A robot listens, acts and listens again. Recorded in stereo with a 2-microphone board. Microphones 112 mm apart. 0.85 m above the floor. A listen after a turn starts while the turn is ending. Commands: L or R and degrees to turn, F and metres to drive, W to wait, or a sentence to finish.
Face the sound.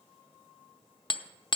L40
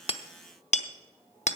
L90
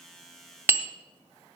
R20
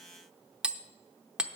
R10
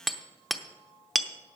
Facing the hammering, under 1 m away.